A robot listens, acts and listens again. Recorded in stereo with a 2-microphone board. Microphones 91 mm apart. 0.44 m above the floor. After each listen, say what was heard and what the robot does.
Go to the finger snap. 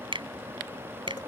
The finger snap: about 70° right or 110° right. Turn 70° right.
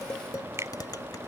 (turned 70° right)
So it is at 30° right. Turn 30° right.
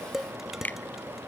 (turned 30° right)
The finger snap is now 20° left. Turn 20° left.
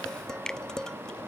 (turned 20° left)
The finger snap is now 10° left. Turn 10° left.
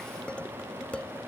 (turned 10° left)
Keep listening.
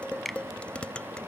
Drive 1.0 m forward.
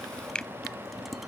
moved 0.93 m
The finger snap is now 10° left. Turn 10° left.
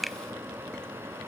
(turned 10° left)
Drive 1.0 m forward.
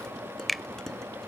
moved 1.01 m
Drive 1.0 m forward.
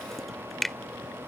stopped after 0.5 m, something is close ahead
I am next to the finger snap.